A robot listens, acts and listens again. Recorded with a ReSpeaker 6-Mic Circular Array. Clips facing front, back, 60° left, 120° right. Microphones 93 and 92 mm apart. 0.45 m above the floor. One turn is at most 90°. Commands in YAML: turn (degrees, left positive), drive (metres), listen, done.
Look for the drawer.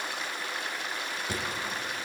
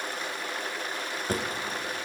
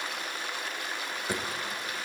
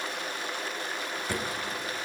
turn: 90
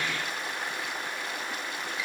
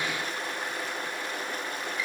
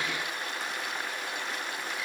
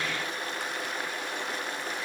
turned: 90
turn: 40
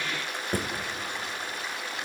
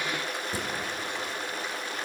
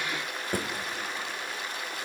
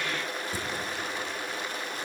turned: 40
turn: 30
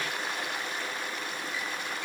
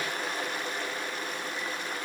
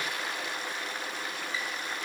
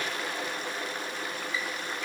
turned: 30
listen: true
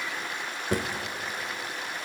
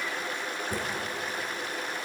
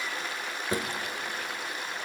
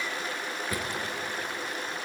done: "Facing the drawer."